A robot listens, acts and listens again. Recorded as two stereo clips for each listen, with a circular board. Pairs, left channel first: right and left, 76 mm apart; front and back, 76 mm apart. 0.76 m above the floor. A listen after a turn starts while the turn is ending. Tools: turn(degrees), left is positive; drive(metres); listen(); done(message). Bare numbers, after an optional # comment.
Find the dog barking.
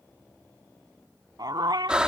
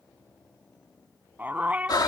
# The dog barking: 110° left.
turn(110)
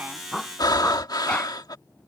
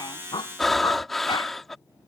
listen()
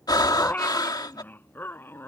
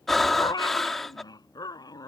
# The dog barking is now 30° right.
turn(-30)
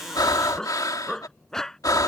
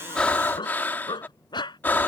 done("Facing the dog barking.")